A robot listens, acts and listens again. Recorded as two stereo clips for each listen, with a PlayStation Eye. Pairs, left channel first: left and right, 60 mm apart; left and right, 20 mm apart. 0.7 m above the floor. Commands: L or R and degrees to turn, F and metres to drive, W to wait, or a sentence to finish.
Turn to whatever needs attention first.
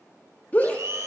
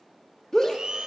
L25
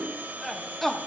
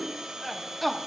Found it: a shout, straight ahead.